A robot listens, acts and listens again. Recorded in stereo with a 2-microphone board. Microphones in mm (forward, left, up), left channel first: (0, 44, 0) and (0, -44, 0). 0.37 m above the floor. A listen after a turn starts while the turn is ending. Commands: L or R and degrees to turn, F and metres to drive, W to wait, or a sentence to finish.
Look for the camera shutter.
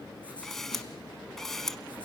L30
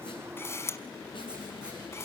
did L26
L145
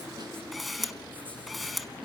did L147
Facing the camera shutter, under 1 m away.